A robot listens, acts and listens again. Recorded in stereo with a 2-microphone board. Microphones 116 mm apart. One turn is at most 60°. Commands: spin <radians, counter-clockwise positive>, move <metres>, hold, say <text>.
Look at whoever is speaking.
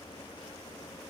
hold
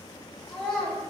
spin 0.52
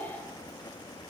hold
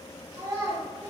spin -0.52
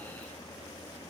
hold
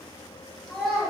say Facing the child speaking.